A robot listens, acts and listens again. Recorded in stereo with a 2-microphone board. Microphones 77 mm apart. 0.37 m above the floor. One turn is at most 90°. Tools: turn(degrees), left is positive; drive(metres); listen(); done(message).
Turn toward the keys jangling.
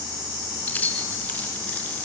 turn(degrees=25)
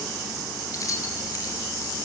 turn(degrees=90)
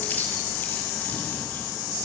turn(degrees=40)
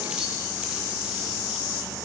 listen()
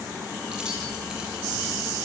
done("Facing where the keys jangling came from. I can't hear it now.")